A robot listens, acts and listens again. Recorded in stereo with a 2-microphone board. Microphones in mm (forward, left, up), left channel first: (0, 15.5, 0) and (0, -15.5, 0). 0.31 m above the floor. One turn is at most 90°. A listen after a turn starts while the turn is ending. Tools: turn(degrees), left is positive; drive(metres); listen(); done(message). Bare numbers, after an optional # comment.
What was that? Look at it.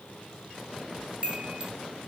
# The chime: about 40° right or 140° right.
turn(-40)
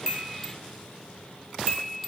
done("Found it: a chime, straight ahead, under 1 m away.")